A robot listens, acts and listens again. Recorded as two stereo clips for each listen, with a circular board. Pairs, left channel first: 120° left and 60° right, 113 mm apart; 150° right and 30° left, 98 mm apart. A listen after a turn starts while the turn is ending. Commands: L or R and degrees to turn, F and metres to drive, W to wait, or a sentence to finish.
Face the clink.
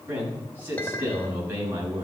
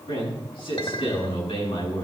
R165
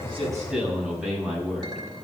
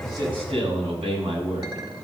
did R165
R10
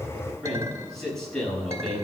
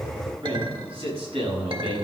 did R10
Found it: a clink, straight ahead.